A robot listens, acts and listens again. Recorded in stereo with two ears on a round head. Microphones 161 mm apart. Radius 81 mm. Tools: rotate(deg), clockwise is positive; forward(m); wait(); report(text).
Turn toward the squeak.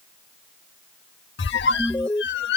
rotate(-65)
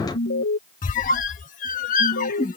rotate(-45)
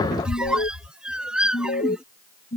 report("Facing the squeak.")